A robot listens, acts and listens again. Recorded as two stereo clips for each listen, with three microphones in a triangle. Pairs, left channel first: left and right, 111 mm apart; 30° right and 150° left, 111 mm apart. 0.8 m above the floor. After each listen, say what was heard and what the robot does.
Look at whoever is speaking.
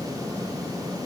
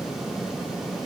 Keep listening.
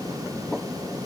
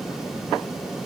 Keep listening.
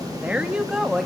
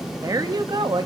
The woman speaking: 175° right. Turn 175° right.
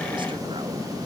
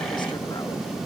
Keep listening.
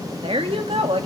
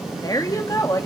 The woman speaking is now 85° right. Turn 85° right.
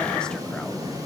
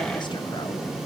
Keep listening.
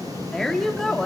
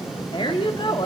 Facing the woman speaking, 1 to 2 m away.